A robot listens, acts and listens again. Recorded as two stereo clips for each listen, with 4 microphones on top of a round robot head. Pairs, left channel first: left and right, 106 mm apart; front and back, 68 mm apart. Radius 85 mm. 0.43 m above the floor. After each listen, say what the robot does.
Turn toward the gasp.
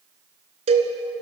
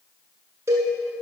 Keep listening.
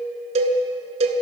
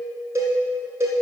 Keep listening.
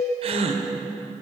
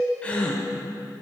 Turn 75° right.
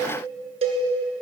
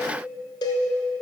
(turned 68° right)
I heard a gasp from this way, but can't make it out now.